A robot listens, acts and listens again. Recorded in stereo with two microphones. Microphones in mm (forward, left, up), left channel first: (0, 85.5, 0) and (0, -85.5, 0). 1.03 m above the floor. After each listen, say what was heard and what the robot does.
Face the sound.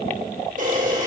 The camera shutter: about 50° right or 130° right. Turn 50° right.
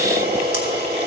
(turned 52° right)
So it is at 75° right. Turn 75° right.
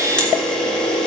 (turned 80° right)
Found it: a camera shutter, straight ahead.